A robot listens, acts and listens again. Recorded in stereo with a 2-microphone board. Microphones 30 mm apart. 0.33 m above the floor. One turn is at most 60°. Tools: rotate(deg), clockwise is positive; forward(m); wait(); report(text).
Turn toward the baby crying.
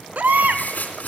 rotate(60)
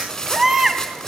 rotate(15)
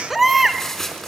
report("Found it: a baby crying, straight ahead, 1 to 2 m away.")